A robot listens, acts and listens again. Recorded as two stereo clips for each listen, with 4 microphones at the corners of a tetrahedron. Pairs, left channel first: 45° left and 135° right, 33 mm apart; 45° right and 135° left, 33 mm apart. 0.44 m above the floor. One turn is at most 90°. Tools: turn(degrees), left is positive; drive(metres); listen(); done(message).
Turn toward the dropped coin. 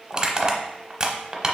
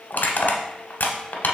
listen()
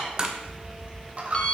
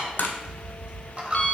turn(degrees=90)
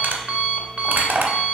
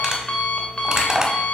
turn(degrees=90)
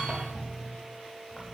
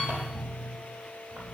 done("Facing where the dropped coin came from. I can't hear it now.")